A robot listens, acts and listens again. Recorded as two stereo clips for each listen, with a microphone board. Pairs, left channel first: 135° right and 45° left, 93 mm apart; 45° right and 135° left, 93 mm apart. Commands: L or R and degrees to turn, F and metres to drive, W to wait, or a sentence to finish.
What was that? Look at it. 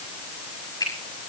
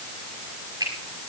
L180
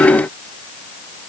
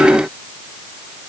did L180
W
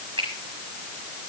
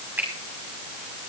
L65
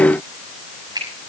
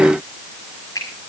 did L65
Facing the finger snap, over 4 m away.